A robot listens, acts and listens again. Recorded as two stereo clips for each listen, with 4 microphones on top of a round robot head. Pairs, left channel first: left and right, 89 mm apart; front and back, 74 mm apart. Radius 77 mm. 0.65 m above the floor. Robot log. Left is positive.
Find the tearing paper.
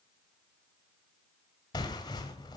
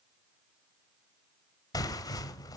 note: The tearing paper: 35° left.
cmd yaw +35
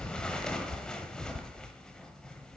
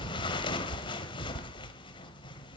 end: Facing the tearing paper, 1 to 2 m away.